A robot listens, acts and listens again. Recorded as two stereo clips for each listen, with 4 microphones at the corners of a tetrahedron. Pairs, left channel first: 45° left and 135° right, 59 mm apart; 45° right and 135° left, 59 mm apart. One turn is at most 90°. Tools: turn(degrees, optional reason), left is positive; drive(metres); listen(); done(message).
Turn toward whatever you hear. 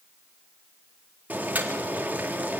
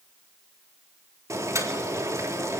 turn(degrees=90, reason="The boiling: 165° left.")
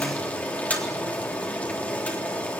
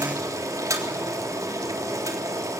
turn(degrees=90, reason="The boiling is now 110° left.")
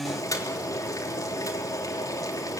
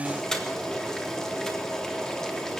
turn(degrees=35, reason="The boiling is now 35° left.")
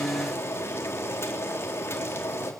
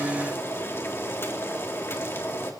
done("Found it: boiling, straight ahead, 2 to 4 m away.")